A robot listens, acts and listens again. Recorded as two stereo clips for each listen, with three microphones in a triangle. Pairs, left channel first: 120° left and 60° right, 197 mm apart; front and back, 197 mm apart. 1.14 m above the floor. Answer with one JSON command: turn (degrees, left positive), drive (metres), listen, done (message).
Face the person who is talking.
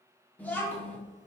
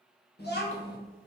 {"turn": 40}
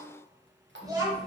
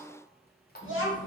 {"turn": 10}
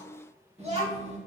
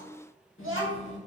{"done": "Found it: a child speaking, straight ahead, 1 to 2 m away."}